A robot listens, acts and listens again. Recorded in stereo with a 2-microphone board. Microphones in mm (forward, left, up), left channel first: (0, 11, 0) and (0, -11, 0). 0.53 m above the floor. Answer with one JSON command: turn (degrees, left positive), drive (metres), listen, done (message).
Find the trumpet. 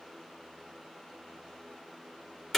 {"listen": true}
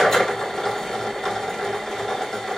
{"listen": true}
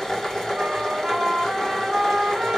{"turn": -55}
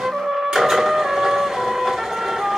{"turn": -65}
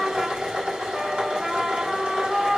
{"turn": -10}
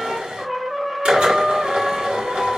{"done": "Found it: a trumpet, straight ahead."}